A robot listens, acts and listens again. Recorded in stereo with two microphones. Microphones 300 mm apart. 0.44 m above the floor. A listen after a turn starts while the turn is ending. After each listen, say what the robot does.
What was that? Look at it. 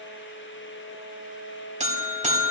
Turn 25° right.
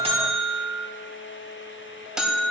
Facing the buzzer, 1 to 2 m away.